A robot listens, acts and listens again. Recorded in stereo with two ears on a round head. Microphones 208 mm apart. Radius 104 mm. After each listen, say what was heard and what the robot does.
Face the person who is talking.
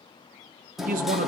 The man speaking: about 40° right or 140° right. Turn 40° right.
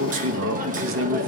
So it is at 95° right. Turn 95° right.
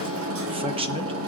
The man speaking is now 30° right. Turn 30° right.
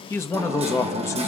The man speaking is now 15° left. Turn 15° left.
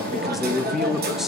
Facing the man speaking.